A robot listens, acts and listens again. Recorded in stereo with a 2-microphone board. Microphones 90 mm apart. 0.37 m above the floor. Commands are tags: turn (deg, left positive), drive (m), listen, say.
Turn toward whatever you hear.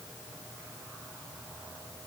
<listen/>
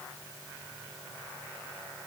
<listen/>
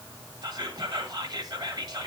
<turn deg="-50"/>
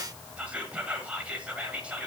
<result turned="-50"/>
<turn deg="-15"/>
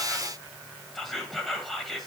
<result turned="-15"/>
<say>Facing the whispering, 1 to 2 m away.</say>